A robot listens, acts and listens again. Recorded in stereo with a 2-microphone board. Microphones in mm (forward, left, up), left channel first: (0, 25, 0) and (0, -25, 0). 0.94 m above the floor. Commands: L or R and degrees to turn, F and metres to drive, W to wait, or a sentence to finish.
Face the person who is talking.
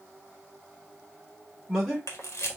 L30
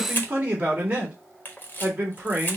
R30
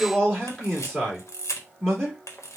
Facing the man speaking, 2 to 4 m away.